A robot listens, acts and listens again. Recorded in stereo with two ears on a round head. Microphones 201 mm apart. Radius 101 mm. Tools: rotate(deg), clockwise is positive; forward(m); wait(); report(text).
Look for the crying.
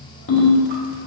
wait()
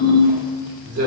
wait()
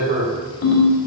report("I can't make out crying to turn to.")